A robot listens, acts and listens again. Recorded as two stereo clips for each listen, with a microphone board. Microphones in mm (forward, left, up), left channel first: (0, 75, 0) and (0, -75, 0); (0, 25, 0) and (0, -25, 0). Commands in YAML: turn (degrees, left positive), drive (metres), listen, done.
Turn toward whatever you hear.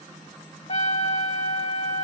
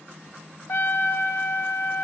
turn: 50
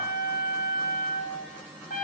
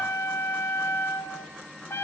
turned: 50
turn: 80
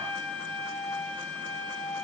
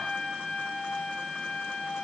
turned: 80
turn: 10
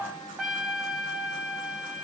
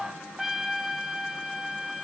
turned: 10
done: "Facing the trumpet, 1 to 2 m away."